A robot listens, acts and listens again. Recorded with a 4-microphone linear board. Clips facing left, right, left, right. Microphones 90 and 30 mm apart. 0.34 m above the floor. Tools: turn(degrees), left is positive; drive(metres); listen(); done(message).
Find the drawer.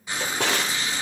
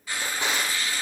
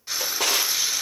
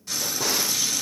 turn(degrees=75)
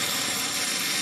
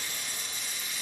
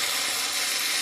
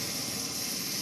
listen()
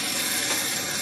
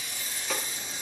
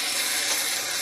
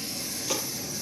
listen()
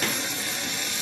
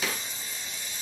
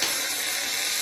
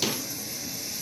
done("I heard a drawer, but can't make it out now. It was about straight ahead or 30° left.")